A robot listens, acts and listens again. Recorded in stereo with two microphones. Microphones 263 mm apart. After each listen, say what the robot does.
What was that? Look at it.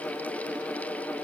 Keep listening.
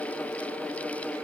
Keep listening.
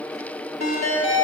Turn 90° left.
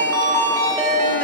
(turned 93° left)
Turn 10° left.
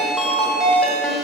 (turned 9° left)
Facing the ringtone.